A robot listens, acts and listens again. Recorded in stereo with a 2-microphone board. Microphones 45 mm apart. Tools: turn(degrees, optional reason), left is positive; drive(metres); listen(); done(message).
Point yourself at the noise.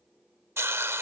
turn(degrees=-65, reason="The hiss: about 65° right or 115° right.")
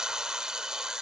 turn(degrees=-15, reason="So it is at 15° right.")
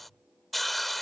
done("Facing the hiss.")